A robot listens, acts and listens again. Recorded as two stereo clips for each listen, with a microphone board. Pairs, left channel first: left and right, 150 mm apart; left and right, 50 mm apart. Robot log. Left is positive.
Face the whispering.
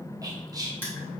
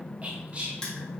note: The whispering: about 25° right or 155° right.
cmd yaw -25
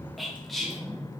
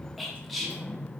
end: Found it: whispering, straight ahead.